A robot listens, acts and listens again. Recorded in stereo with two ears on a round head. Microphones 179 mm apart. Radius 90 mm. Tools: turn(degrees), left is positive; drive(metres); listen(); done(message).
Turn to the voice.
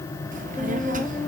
turn(degrees=-40)
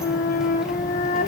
listen()
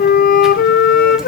listen()
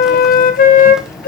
done("I heard a child speaking, but can't make it out now. It was about straight ahead or 100° right.")